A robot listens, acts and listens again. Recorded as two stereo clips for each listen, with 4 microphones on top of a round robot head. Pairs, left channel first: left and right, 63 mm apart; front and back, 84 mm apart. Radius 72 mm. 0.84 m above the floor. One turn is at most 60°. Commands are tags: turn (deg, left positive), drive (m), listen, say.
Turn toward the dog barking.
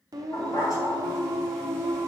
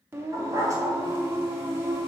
<turn deg="60"/>
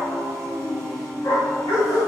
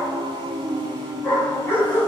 <turn deg="60"/>
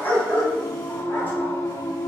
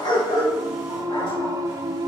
<turn deg="30"/>
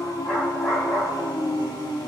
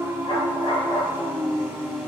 <turn deg="10"/>
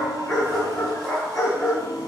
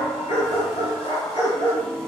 <say>Facing the dog barking, over 4 m away.</say>